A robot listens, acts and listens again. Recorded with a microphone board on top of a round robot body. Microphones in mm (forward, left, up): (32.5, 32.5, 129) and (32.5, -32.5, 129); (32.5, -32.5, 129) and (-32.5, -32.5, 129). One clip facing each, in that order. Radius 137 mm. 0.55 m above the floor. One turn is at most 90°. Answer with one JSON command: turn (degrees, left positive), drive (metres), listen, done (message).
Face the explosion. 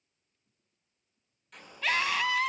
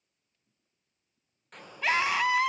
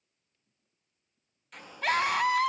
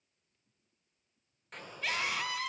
{"turn": -90}
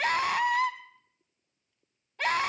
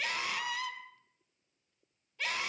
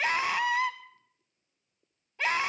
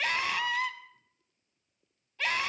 {"turn": -40}
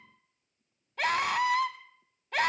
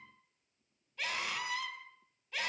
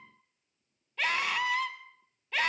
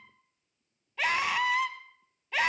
{"done": "Facing where the explosion came from. I can't hear it now."}